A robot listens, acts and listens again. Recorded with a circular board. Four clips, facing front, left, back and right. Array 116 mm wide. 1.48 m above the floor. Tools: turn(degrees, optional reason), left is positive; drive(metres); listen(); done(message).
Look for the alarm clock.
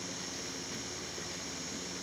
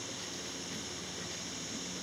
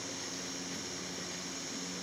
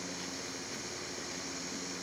listen()
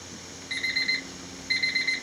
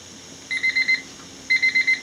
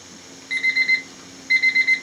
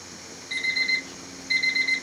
turn(degrees=120, reason="The alarm clock: 120° left.")
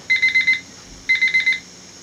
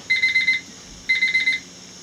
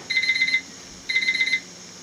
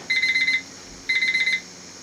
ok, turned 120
done("Facing the alarm clock.")